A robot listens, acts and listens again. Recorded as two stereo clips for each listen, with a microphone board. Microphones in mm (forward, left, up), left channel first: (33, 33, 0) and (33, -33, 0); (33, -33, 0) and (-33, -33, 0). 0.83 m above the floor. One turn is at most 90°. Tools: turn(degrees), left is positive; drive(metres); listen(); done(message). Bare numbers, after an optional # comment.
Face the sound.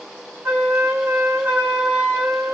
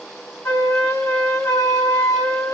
# The flute: 35° right.
turn(-35)
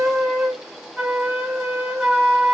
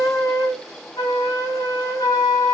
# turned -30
done("Found it: a flute, straight ahead, 1 to 2 m away.")